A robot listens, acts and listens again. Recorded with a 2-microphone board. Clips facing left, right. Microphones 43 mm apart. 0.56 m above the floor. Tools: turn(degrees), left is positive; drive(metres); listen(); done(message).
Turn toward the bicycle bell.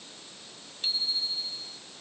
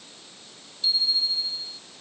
turn(degrees=45)
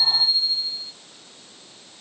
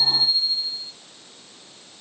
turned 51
done("Facing the bicycle bell.")